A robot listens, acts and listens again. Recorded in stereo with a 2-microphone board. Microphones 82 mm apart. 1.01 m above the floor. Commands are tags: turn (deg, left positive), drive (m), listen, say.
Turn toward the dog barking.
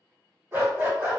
<turn deg="-25"/>
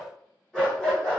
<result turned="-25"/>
<turn deg="10"/>
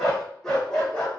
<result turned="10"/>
<turn deg="15"/>
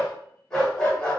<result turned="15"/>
<turn deg="20"/>
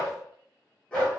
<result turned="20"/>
<turn deg="15"/>
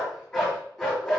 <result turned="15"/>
<say>Found it: a dog barking, straight ahead.</say>